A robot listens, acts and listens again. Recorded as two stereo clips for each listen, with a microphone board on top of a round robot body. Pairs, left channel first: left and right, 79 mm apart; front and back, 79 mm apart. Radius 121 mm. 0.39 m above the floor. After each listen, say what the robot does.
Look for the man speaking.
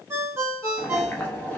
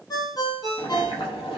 Keep listening.
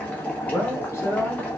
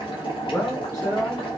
Turn 35° left.
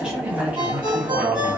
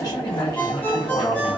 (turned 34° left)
Turn 30° right.
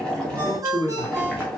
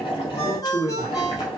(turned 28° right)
Turn 20° right.
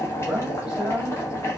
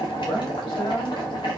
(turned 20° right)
Turn 10° right.
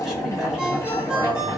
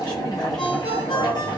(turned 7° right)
Keep listening.
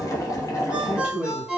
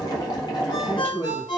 Found it: a man speaking, straight ahead, 1 to 2 m away.